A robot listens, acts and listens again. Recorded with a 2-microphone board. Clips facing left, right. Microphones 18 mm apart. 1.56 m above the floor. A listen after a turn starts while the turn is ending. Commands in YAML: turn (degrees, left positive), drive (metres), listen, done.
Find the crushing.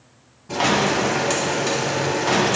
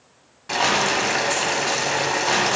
turn: 30
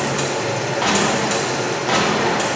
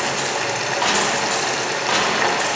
turn: -15
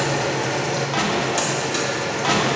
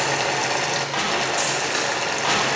done: "Found it: crushing, straight ahead."